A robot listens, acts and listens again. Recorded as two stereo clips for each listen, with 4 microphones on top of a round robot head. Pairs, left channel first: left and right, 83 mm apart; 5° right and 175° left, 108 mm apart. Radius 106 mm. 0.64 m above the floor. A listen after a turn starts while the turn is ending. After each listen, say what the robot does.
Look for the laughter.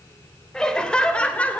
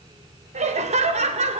Turn 165° left.
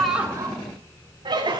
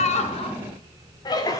Turn 60° right.
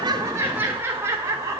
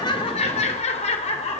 Turn 30° right.
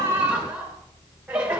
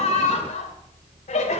Turn 10° right.
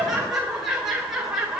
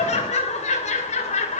Facing the laughter.